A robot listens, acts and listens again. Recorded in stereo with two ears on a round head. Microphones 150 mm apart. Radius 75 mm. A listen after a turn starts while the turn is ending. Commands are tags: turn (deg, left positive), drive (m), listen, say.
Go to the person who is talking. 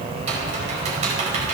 <listen/>
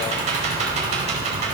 <listen/>
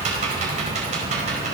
<say>I can't make out anyone speaking.</say>